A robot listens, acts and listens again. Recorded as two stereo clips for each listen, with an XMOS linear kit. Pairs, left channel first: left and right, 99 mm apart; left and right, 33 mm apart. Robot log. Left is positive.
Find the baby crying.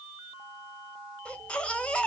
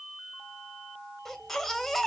cmd yaw +30
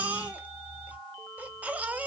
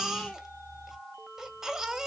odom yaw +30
note: So it is at 15° right.
cmd yaw -15
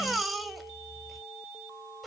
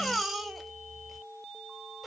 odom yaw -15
end: Found it: a baby crying, straight ahead, 1 to 2 m away.